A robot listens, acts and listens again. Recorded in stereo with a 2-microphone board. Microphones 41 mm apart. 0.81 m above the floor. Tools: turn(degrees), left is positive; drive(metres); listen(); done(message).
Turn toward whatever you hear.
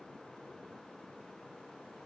listen()
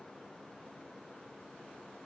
listen()
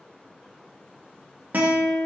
turn(degrees=-45)
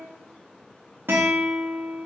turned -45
turn(degrees=-85)
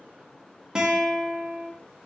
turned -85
turn(degrees=-20)
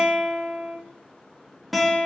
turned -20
done("Found it: a guitar, straight ahead, under 1 m away.")